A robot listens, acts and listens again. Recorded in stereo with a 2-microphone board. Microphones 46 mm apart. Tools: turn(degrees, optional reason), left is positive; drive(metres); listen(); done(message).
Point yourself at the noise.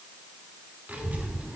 turn(degrees=-35, reason="The child speaking: about 35° right or 145° right.")
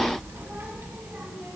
turn(degrees=-125, reason="So it is at 125° right.")
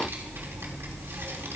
turn(degrees=-70, reason="The child speaking is now 70° right.")
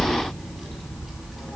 done("Facing the child speaking, 2 to 4 m away.")